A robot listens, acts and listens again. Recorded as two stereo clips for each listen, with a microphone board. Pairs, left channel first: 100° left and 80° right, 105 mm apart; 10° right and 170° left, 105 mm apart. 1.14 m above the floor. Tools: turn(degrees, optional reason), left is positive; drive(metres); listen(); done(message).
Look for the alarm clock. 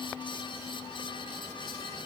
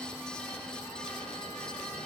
listen()
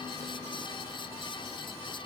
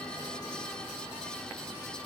listen()
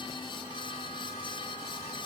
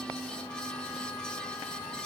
done("I can't make out an alarm clock.")